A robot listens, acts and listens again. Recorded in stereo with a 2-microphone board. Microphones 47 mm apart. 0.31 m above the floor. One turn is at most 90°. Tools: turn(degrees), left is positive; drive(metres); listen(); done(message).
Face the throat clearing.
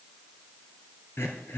turn(degrees=55)
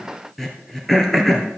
done("Found it: throat clearing, straight ahead.")